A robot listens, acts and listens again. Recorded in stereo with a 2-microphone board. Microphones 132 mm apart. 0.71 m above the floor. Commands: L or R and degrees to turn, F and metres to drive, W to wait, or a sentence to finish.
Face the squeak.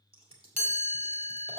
W
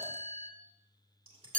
W
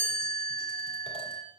I can't make out a squeak, only scissors and a chime.